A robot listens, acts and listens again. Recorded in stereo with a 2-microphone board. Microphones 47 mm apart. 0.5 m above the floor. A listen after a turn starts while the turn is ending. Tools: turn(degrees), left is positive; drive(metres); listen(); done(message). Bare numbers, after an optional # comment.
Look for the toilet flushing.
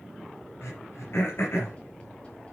listen()
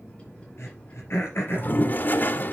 # The toilet flushing: about 45° left or 135° left.
turn(45)
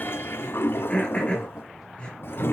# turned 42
# So it is at 80° left.
turn(80)
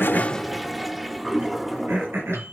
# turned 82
done("Facing the toilet flushing.")